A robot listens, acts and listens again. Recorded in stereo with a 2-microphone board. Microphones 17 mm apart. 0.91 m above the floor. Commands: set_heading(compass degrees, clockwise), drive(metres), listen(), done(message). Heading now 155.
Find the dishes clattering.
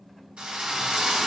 listen()
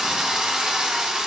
listen()
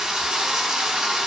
done("I can't make out dishes clattering, only a drill.")